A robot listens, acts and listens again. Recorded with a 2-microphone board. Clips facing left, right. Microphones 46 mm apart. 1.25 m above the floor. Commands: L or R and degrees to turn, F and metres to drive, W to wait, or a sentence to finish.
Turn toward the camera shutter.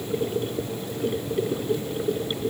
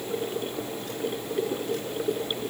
W
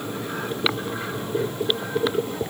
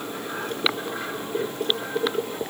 W
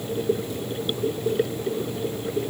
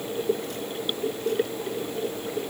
I can't make out a camera shutter.